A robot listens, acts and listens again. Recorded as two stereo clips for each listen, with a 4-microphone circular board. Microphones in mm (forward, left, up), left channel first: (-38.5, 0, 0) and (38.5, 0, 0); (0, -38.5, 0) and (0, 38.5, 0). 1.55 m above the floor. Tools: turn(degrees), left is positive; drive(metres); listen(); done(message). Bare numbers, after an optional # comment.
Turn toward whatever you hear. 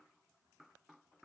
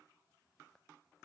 listen()
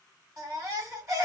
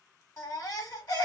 # The baby crying: 45° right.
turn(-45)
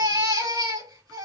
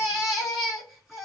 done("Found it: a baby crying, straight ahead, over 4 m away.")